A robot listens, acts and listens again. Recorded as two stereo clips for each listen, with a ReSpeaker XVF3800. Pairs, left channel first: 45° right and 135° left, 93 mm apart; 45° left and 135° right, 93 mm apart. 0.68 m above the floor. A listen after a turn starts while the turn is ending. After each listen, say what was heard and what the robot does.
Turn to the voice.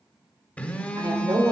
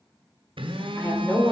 The woman speaking: 110° left. Turn 110° left.
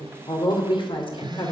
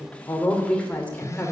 The woman speaking is now 30° right. Turn 30° right.
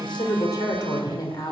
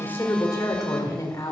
Facing the woman speaking, 2 to 4 m away.